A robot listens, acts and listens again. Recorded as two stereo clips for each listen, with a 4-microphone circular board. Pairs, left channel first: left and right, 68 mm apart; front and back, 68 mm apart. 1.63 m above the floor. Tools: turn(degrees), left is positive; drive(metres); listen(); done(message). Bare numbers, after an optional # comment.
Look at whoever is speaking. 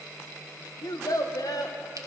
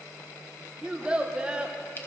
# The child speaking: 105° left.
turn(105)
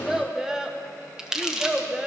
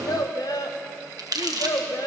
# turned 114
# The child speaking is now 10° right.
turn(-10)
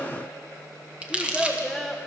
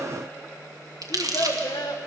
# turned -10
done("Found it: a child speaking, straight ahead, 1 to 2 m away.")